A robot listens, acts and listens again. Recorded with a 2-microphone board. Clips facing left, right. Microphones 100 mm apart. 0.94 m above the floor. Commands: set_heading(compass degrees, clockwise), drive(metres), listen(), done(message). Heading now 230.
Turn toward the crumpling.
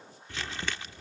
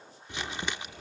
set_heading(250)
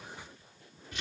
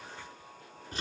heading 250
set_heading(25)
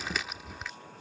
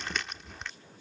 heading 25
done("Facing the crumpling.")